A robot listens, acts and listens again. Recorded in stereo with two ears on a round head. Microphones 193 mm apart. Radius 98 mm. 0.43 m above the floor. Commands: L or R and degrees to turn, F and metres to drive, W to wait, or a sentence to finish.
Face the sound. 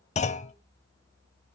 L35
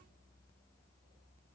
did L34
W
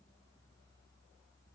I heard a clunk, but can't make it out now. It was about straight ahead or 115° left.